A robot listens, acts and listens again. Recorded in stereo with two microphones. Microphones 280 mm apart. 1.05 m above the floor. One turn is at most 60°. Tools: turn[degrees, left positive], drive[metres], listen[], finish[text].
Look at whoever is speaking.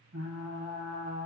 Action: listen[]
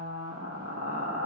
Action: listen[]
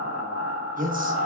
Thought: The man speaking: about 30° right or 150° right.
Action: turn[-30]
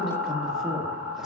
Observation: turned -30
Action: finish[Facing the man speaking, 1 to 2 m away.]